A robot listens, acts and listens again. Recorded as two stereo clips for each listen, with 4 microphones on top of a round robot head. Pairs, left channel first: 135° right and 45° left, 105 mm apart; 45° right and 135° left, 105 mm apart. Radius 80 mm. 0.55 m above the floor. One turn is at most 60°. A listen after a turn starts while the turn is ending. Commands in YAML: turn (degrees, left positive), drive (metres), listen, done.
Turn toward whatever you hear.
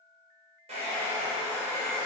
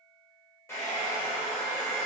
turn: 20
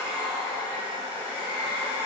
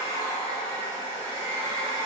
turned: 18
done: "Found it: a hair dryer, straight ahead, 1 to 2 m away."